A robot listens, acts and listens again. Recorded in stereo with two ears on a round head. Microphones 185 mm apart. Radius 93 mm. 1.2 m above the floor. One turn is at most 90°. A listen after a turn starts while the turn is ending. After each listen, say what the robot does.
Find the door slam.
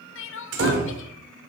Turn 60° right.
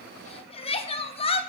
Keep listening.
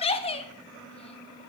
I heard a door slam, but can't make it out now. It was about straight ahead or 60° right.